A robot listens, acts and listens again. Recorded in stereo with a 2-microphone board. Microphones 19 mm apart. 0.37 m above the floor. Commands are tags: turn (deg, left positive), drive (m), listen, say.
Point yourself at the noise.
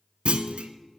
<turn deg="-90"/>
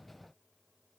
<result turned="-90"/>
<say>I heard a clunk from this way, but can't make it out now.</say>